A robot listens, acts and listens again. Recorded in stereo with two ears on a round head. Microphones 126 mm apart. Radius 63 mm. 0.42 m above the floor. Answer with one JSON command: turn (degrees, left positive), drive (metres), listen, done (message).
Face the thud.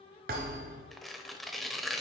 {"turn": -65}
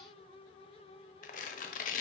{"listen": true}
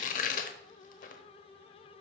{"done": "I heard a thud, but can't make it out now. It was about straight ahead or 50° right."}